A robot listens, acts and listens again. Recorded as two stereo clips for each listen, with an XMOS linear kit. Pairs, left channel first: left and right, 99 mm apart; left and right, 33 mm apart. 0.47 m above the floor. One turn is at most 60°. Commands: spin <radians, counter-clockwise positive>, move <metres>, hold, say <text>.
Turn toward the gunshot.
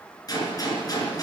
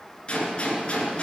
spin 0.61
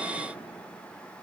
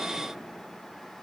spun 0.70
hold
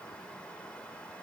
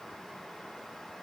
say I heard a gunshot, but can't make it out now. It was about 5° right or 105° left.